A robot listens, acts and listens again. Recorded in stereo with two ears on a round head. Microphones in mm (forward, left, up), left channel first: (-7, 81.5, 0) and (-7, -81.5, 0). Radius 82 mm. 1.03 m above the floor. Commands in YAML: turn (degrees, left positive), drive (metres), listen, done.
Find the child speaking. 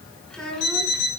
turn: 30
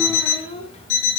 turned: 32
turn: 145
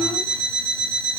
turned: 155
turn: -10
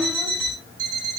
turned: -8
listen: true
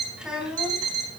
done: "Facing the child speaking."